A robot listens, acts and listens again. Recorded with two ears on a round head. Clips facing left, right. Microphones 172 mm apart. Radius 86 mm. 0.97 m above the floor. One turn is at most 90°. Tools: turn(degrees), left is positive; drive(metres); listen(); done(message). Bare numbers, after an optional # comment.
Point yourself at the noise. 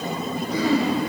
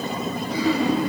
# The throat clearing: about 45° left or 135° left.
turn(45)
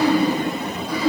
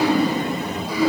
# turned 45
done("Found it: throat clearing, straight ahead.")